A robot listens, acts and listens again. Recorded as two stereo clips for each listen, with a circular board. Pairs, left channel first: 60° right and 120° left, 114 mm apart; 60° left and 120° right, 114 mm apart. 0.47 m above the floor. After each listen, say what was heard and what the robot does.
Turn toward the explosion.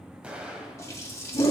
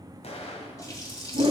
The explosion: 40° left. Turn 40° left.
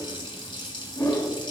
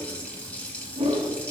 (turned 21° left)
Nothing new. It was at 20° left. Turn 20° left.
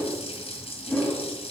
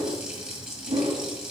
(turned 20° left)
Facing where the explosion came from. I can't hear it now.